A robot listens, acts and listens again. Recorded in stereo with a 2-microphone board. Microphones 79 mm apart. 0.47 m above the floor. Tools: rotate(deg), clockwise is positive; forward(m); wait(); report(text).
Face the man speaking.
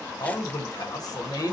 rotate(-50)
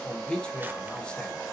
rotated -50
rotate(-15)
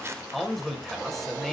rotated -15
report("Found it: a man speaking, straight ahead, 1 to 2 m away.")